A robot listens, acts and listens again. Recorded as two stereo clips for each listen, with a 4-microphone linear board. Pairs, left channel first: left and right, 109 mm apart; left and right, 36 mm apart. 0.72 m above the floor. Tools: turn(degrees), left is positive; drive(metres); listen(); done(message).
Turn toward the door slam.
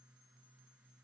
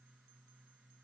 listen()
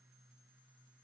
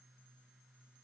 listen()
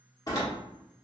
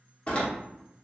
turn(degrees=35)
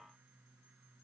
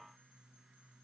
listen()
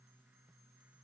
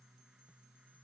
done("I heard a door slam, but can't make it out now. It was about straight ahead or 110° left.")